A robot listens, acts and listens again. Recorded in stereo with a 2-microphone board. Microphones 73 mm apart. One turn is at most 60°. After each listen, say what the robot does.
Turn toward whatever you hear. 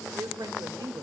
Turn 60° right.
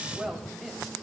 Facing the woman speaking.